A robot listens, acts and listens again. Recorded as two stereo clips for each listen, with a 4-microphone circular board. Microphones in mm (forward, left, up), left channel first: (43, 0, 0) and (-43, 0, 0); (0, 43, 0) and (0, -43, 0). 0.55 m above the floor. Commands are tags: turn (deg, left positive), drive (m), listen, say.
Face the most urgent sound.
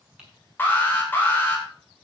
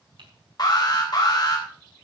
<turn deg="60"/>
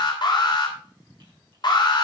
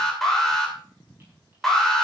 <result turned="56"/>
<say>Found it: an alarm, straight ahead, 2 to 4 m away.</say>